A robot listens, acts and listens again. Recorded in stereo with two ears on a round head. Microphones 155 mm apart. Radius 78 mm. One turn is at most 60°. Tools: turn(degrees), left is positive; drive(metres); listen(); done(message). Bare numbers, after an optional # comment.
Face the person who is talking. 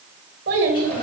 # The child speaking: about 65° right or 115° right.
turn(-60)
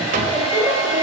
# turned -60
listen()
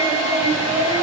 # So it is at 10° right.
turn(-10)
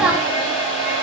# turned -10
listen()
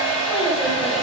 listen()
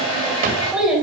done("Facing the child speaking.")